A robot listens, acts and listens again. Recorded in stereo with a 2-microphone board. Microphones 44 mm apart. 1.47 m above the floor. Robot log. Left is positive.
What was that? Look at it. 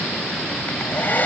note: The hair dryer: about 45° left or 135° left.
cmd yaw +45
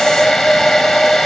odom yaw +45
note: So it is at 10° left.
cmd yaw +10
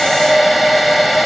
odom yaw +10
end: Found it: a hair dryer, straight ahead.